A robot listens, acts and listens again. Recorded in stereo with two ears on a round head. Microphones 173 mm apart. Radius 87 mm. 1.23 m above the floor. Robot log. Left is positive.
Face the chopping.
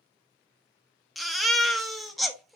cmd idle
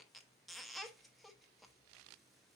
cmd idle
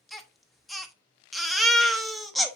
end: I can't make out chopping to turn to.